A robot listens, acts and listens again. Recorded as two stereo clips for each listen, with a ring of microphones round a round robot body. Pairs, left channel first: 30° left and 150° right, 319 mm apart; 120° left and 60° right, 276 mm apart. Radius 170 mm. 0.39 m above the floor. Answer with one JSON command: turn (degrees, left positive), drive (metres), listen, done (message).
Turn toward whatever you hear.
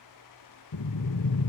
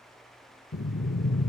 {"turn": 60}
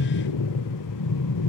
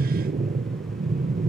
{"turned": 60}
{"done": "Found it: breathing, straight ahead, under 1 m away."}